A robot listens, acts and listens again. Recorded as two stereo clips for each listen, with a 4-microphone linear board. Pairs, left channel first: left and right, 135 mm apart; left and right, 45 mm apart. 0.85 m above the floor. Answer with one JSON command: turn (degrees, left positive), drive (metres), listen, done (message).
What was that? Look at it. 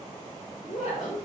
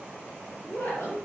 {"turn": 60}
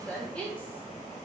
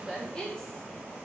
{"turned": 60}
{"turn": 10}
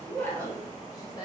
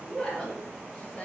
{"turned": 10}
{"turn": 30}
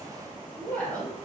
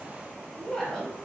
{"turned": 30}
{"turn": 10}
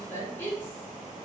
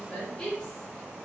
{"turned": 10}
{"turn": 15}
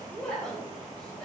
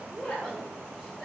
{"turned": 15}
{"done": "Facing the woman speaking, 1 to 2 m away."}